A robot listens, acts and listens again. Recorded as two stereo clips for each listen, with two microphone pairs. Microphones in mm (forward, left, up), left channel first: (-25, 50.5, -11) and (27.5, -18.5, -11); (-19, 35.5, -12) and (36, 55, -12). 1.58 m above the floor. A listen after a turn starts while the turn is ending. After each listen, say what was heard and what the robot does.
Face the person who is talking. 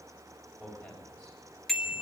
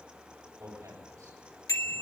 The man speaking: 45° left. Turn 45° left.
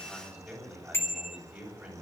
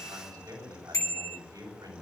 The man speaking is now 15° left. Turn 15° left.
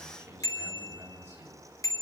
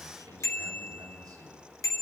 Facing the man speaking, over 4 m away.